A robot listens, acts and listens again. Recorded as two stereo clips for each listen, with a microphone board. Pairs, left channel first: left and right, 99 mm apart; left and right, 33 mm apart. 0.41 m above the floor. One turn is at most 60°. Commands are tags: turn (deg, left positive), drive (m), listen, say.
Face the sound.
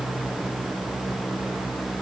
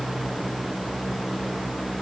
<listen/>
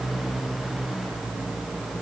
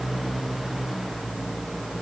<listen/>
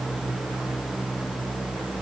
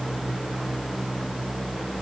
<say>I can't make out anything.</say>